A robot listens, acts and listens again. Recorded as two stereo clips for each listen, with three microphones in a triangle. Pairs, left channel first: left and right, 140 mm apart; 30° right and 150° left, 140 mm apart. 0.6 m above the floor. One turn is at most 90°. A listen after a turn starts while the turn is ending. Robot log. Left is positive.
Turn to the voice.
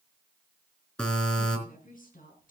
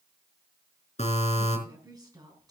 note: The woman speaking: 90° left.
cmd yaw +90
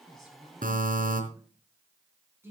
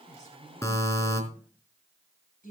note: The woman speaking is now 15° right.
cmd yaw -15
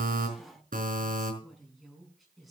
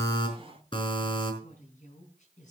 end: Facing the woman speaking.